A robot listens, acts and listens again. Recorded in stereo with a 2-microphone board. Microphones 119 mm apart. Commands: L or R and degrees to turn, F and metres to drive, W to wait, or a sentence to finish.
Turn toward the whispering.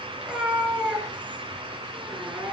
W
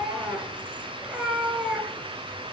W
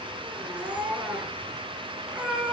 I can't make out whispering to turn to.